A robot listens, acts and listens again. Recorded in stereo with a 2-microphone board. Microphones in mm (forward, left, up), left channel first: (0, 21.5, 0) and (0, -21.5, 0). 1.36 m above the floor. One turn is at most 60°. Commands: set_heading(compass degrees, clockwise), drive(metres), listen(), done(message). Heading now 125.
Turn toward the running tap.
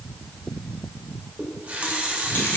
set_heading(160)
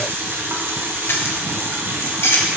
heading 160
set_heading(220)
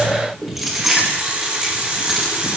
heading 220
set_heading(250)
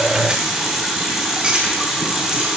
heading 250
set_heading(260)
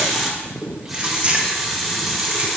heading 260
done("Found it: a running tap, straight ahead, 1 to 2 m away.")